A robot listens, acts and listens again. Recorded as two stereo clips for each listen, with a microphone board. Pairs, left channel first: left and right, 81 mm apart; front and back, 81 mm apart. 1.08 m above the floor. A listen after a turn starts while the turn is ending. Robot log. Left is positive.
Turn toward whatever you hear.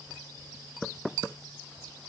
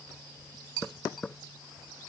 cmd idle
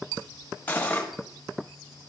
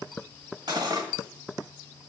note: The cutlery clinking: 160° left.
cmd yaw +160
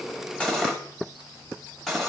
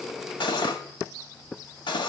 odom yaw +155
end: Found it: cutlery clinking, straight ahead.